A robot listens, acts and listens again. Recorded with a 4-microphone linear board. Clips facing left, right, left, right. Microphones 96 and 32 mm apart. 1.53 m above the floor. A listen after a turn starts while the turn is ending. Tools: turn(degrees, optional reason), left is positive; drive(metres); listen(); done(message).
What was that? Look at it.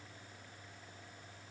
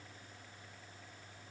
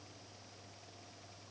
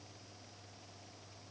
listen()
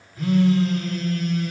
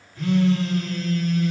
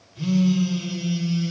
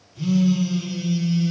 turn(degrees=30)
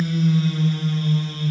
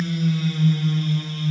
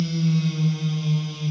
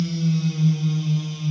turn(degrees=145, reason="So it is at 145° left.")
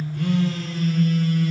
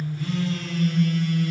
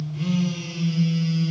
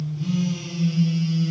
turn(degrees=40, reason="The phone buzzing is now 40° left.")
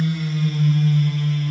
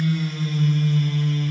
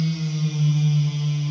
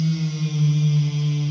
done("Found it: a phone buzzing, straight ahead, 1 to 2 m away.")